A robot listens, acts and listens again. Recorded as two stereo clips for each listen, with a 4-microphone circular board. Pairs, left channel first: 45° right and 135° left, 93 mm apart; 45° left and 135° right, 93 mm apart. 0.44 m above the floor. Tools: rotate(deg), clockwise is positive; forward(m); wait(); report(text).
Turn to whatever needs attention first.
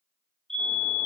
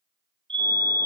rotate(130)
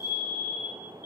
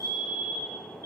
rotate(10)
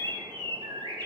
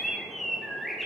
wait()
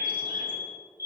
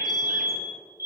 report("Found it: a fire alarm, straight ahead, 2 to 4 m away.")